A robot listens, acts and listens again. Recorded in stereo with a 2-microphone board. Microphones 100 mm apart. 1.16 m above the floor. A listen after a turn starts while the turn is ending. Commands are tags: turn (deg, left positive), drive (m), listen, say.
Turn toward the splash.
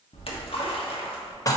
<turn deg="70"/>
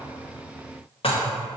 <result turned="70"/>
<listen/>
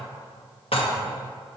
<say>I heard a splash, but can't make it out now. It was about straight ahead or 40° left.</say>